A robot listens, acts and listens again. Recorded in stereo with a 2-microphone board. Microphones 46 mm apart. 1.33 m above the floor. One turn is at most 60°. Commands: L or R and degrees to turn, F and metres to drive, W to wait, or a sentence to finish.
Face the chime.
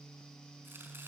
W
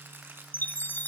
L40
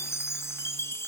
L60
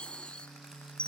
L25
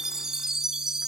R10
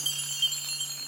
Found it: a chime, straight ahead, under 1 m away.